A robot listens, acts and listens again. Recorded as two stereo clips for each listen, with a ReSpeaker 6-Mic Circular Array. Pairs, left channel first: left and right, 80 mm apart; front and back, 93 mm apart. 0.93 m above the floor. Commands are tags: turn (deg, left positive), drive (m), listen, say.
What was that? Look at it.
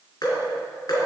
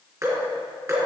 <turn deg="125"/>
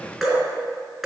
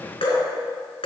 <say>Found it: dripping, straight ahead, 2 to 4 m away.</say>